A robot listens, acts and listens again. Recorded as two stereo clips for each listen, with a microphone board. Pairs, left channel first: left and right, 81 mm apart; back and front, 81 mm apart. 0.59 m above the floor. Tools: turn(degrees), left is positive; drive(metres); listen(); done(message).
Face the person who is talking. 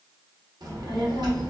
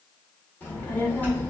turn(degrees=-115)
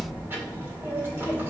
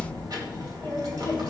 turn(degrees=-30)
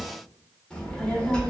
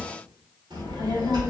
turn(degrees=10)
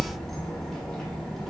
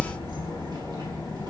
done("Facing the child speaking.")